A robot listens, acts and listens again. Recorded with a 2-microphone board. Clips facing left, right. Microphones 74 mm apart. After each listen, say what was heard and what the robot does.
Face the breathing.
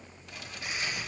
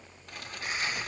The breathing: about 40° right or 140° right. Turn 40° right.
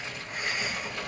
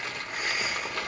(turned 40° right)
Facing the breathing, 1 to 2 m away.